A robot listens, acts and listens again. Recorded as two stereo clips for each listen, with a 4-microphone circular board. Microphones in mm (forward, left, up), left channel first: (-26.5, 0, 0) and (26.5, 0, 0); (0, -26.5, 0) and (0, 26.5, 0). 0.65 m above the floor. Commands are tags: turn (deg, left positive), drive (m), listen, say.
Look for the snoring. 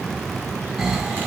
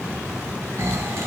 <turn deg="80"/>
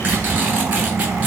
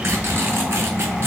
<turn deg="15"/>
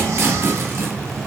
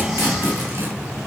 <listen/>
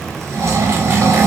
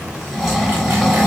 <say>Facing the snoring.</say>